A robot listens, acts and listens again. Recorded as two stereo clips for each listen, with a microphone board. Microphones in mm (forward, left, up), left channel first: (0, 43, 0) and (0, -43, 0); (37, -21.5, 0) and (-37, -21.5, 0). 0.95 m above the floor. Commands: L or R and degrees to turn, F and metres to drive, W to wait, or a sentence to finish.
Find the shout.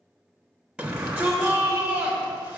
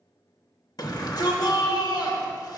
R10
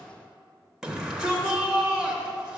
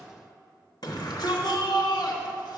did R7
Facing the shout.